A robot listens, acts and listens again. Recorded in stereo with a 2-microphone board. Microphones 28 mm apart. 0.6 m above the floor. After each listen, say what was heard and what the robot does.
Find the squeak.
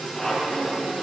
The squeak: about 20° left or 160° left. Turn 20° left.
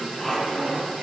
Facing the squeak.